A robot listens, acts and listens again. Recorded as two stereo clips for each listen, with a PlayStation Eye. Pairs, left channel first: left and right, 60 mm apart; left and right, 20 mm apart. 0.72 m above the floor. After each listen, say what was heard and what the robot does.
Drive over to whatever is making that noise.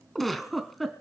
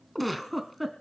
Turn 30° left.
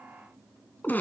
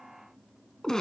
So it is at 155° left. Turn 155° left.
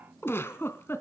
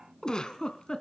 The giggle is now 40° left. Turn 40° left.
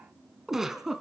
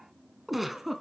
Drive 1.0 m forward.
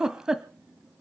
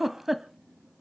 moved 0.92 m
The giggle is now 10° right. Turn 10° right.
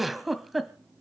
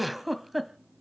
Drive 1.0 m forward.
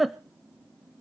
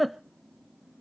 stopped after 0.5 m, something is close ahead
I am next to the giggle.